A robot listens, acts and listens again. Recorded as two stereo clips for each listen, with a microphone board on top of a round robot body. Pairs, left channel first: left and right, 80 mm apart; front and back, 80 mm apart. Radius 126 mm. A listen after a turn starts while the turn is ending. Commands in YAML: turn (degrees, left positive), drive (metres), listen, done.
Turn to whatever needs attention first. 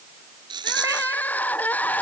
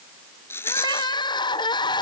turn: 20
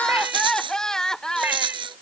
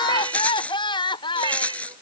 done: "Facing the crying."